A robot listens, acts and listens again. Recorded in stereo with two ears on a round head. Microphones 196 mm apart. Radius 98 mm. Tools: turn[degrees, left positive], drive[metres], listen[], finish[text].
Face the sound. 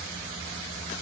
Action: listen[]
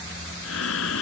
Thought: The breathing: about 70° left or 110° left.
Action: turn[70]
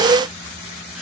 Action: listen[]
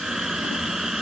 Action: finish[Found it: breathing, straight ahead.]